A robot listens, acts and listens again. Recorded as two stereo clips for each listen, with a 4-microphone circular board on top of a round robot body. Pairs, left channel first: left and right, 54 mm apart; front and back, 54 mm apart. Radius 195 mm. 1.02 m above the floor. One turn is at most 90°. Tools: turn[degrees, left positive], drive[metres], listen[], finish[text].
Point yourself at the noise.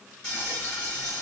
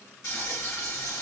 Thought: The frying: 10° left.
Action: turn[10]
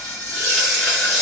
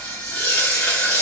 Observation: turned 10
Action: finish[Found it: frying, straight ahead.]